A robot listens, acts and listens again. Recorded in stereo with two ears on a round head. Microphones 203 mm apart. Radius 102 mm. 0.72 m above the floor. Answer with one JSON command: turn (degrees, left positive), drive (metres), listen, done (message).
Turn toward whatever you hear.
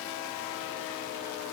{"listen": true}
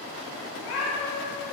{"turn": 70}
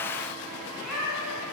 {"done": "Found it: a cat meowing, straight ahead, 1 to 2 m away."}